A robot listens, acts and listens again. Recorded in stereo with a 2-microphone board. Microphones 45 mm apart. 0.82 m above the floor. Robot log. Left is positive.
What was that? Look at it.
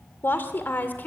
note: The woman speaking: about 40° left or 140° left.
cmd yaw +40
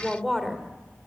end: Facing the woman speaking.